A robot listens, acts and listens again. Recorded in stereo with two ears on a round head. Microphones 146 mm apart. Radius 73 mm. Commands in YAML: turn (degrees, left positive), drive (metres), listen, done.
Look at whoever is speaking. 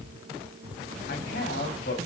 turn: 60
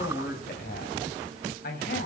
turn: 60
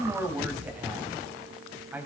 turn: -10
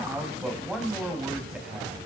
done: "Facing the man speaking."